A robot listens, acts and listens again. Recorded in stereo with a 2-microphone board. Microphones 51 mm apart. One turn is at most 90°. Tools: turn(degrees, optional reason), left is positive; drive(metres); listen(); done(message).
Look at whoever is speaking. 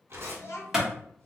turn(degrees=60, reason="The child speaking: about 60° left or 120° left.")
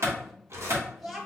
done("Found it: a child speaking, straight ahead.")